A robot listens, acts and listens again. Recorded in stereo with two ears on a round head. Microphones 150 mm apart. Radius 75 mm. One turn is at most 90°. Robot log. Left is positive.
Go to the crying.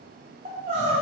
note: The crying: about 45° right or 135° right.
cmd yaw -45
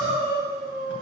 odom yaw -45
note: So it is at 95° right.
cmd yaw -90
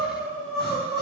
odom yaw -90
cmd fwd 1.0
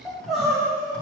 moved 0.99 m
cmd fwd 1.0
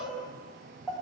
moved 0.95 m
cmd fwd 1.0
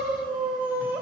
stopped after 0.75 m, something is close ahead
note: The crying is now 10° right.
cmd yaw -10
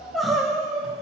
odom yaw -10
end: Arrived at the crying, straight ahead.